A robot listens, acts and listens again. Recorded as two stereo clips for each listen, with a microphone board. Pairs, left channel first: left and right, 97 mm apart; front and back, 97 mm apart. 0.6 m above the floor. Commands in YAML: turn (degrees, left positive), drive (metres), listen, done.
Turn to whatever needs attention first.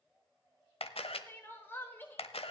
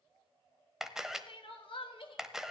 turn: 20
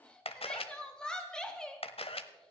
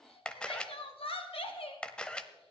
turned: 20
turn: 10
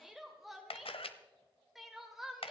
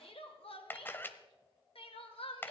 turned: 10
done: "Facing the crying."